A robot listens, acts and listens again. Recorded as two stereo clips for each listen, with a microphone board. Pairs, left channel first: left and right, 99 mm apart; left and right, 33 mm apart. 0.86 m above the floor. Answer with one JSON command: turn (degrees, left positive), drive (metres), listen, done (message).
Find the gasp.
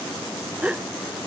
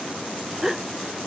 {"turn": -30}
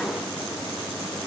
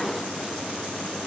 {"listen": true}
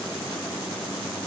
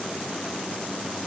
{"done": "I heard a gasp, but can't make it out now. It was about 15° left or 135° right."}